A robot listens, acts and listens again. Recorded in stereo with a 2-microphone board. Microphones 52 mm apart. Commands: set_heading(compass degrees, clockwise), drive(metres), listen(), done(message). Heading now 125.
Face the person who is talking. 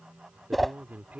set_heading(155)
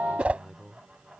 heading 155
done("Facing the man speaking.")